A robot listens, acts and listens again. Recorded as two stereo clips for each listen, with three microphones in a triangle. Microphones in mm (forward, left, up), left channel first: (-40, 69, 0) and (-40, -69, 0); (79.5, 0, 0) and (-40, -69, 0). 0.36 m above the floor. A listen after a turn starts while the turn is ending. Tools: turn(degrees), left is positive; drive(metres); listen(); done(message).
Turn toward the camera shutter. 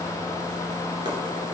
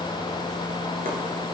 listen()
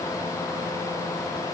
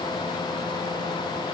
listen()
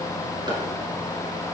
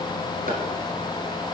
done("I can't make out a camera shutter.")